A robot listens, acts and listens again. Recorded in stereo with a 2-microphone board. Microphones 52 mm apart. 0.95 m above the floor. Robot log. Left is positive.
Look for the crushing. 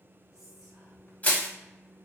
note: The crushing: about 30° left or 150° left.
cmd yaw +30
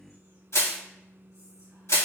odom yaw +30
note: So it is at 120° left.
cmd yaw +120
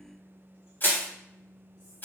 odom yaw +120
note: The crushing is now 40° left.
cmd yaw +40
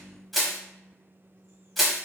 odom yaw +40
end: Facing the crushing.